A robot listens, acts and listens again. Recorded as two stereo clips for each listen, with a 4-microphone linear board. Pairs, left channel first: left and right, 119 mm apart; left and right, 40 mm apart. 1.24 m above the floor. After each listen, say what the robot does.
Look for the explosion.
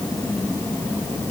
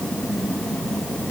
Keep listening.
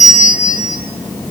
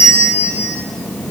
Keep listening.
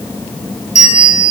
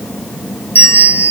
I can't make out an explosion, only a bell.